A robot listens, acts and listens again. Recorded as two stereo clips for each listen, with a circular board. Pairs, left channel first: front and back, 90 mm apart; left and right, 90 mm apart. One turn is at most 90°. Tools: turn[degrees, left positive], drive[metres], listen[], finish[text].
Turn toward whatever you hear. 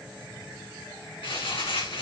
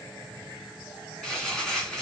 Thought: The crumpling: 10° left.
Action: turn[10]
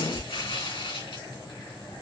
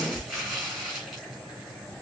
Action: finish[Facing the crumpling.]